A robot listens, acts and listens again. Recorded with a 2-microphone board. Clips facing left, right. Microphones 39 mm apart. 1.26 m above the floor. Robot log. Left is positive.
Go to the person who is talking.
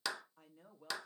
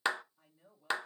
note: The woman speaking: about 60° left or 120° left.
cmd yaw +60
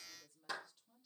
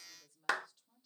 cmd fwd 1.0
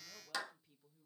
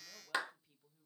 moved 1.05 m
cmd fwd 1.0
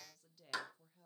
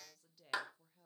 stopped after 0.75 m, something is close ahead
end: Arrived at the woman speaking, straight ahead.